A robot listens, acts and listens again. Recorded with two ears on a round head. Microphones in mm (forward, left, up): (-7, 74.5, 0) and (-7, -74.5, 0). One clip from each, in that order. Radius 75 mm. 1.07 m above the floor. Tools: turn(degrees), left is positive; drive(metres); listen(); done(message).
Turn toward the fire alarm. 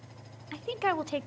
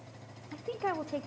listen()
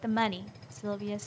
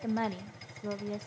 listen()
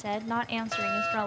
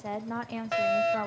turn(degrees=-30)
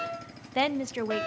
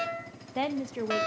turn(degrees=-140)
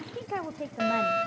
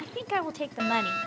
done("Found it: a fire alarm, straight ahead.")